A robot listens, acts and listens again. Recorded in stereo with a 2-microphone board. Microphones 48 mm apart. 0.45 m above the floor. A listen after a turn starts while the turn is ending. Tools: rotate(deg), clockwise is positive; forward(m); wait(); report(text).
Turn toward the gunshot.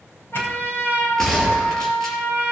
rotate(-30)
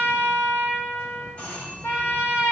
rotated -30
wait()
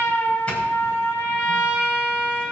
report("I heard a gunshot, but can't make it out now. It was about 20° right or 140° left.")